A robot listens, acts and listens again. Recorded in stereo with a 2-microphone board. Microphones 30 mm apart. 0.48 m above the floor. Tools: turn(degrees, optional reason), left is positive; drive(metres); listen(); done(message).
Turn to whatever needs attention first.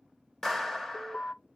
turn(degrees=70, reason="The alarm: about 70° left or 110° left.")
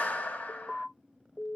turn(degrees=30, reason="So it is at 30° left.")
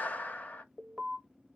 done("Facing the alarm.")